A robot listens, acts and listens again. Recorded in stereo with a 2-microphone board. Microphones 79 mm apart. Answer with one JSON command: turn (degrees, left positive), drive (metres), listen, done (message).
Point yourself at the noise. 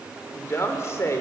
{"turn": 40}
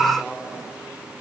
{"done": "Facing the woman speaking, 2 to 4 m away."}